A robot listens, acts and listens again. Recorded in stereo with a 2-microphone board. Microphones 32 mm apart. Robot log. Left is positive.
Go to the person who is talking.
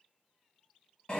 cmd idle
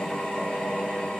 cmd idle
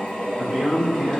note: The man speaking: about 25° right or 155° right.
cmd yaw -25
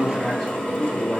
cmd fwd 1.0
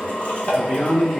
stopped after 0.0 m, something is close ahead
end: Blocked. The man speaking is further on, straight ahead.